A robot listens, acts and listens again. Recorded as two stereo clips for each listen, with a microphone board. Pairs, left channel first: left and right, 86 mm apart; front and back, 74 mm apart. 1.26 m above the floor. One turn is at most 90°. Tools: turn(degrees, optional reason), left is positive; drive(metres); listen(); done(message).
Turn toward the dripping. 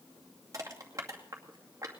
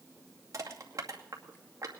listen()
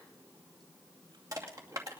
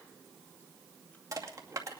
listen()
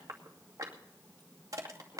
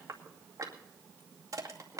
done("I can't make out dripping to turn to.")